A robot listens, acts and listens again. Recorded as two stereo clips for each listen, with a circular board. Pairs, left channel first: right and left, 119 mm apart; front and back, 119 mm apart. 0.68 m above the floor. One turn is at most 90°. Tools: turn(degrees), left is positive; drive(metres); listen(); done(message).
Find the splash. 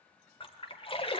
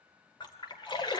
turn(degrees=-50)
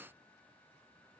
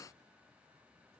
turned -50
done("I heard a splash from this way, but can't make it out now.")